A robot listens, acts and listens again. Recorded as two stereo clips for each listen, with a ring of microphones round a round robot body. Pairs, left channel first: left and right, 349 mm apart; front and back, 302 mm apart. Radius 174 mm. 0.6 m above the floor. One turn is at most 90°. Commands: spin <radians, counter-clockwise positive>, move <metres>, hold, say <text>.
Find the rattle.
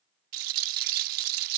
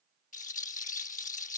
spin -1.13
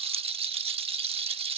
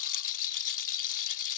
spin -0.26
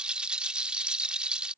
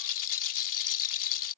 say Found it: a rattle, straight ahead.